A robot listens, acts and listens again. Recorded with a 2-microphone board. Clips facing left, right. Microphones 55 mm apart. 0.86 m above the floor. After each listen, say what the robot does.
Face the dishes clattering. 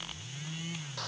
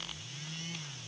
Keep listening.
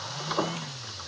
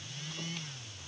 Keep listening.
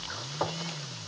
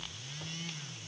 I can't make out dishes clattering, only frying.